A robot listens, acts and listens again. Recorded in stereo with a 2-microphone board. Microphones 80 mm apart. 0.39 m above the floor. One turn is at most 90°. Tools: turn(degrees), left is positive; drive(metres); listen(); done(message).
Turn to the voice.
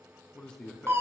turn(degrees=30)
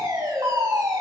listen()
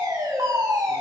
listen()
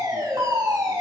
done("I heard a man speaking, but can't make it out now. It was about 20° right or 140° left.")